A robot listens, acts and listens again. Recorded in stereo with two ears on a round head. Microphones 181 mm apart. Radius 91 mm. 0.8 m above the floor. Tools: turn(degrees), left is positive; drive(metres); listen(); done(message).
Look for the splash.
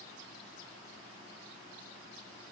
listen()
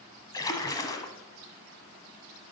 turn(degrees=20)
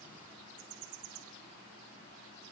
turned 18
listen()
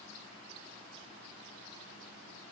done("I heard a splash, but can't make it out now. It was about straight ahead or 145° left.")